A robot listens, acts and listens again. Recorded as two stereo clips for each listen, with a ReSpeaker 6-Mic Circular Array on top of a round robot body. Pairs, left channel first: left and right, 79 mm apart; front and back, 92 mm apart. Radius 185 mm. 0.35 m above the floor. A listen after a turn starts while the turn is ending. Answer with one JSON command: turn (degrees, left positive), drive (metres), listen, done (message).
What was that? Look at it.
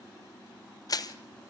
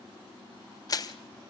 {"turn": 50}
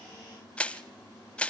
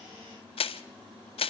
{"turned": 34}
{"turn": 15}
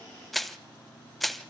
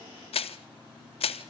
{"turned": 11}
{"done": "Found it: crushing, straight ahead, 1 to 2 m away."}